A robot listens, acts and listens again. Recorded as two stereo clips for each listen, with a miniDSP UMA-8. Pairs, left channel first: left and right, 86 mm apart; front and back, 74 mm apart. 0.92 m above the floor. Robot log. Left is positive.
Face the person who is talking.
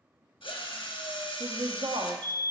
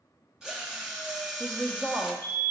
note: The woman speaking: 105° right.
cmd yaw -105
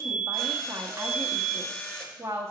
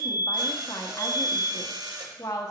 note: The woman speaking is now 35° right.
cmd yaw -35
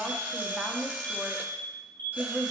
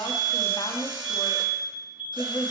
end: Found it: a woman speaking, straight ahead.